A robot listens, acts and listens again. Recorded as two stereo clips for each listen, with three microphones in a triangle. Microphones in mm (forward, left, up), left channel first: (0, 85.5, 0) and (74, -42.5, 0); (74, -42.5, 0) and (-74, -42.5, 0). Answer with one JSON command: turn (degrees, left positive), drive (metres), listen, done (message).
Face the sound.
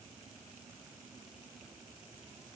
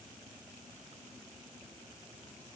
{"listen": true}
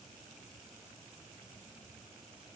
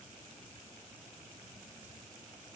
{"listen": true}
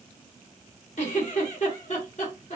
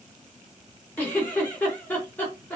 {"turn": 80}
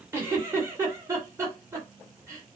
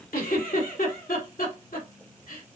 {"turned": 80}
{"turn": 10}
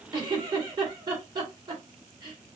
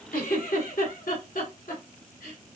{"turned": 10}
{"done": "Found it: a giggle, straight ahead, 2 to 4 m away."}